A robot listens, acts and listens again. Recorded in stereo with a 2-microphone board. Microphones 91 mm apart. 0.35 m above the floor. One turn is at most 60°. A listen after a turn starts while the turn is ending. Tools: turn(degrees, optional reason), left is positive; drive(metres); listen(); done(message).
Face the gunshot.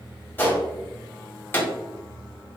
turn(degrees=25, reason="The gunshot: about 25° left or 155° left.")
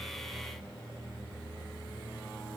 listen()
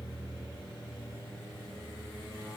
done("I heard a gunshot, but can't make it out now. It was about straight ahead or 130° left.")